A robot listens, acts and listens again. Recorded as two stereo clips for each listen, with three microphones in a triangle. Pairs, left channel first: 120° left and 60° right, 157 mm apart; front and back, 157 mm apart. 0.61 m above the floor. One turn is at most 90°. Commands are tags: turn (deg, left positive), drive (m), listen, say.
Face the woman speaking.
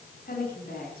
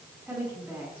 <turn deg="90"/>
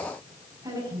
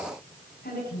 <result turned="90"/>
<say>Found it: a woman speaking, straight ahead, over 4 m away.</say>